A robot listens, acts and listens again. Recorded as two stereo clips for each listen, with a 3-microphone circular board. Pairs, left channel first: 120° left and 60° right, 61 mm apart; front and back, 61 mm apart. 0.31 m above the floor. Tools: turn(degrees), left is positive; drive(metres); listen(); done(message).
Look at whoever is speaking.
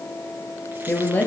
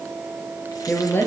turn(degrees=55)
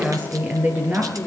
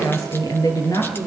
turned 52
done("Found it: a woman speaking, straight ahead.")